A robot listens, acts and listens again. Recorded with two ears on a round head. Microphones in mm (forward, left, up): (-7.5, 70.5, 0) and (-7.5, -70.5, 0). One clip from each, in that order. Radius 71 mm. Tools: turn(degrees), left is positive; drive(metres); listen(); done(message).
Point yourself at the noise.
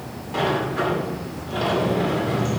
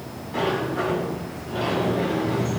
turn(degrees=25)
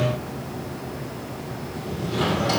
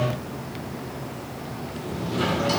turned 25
done("Facing the sliding door.")